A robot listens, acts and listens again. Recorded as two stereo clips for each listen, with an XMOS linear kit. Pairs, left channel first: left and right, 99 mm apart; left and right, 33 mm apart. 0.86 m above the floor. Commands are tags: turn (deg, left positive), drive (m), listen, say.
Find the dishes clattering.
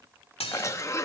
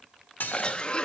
<turn deg="90"/>
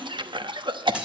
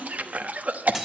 <turn deg="-10"/>
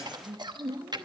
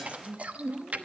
<listen/>
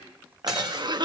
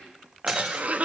<listen/>
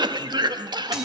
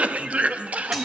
<say>I heard dishes clattering from this way, but can't make it out now.</say>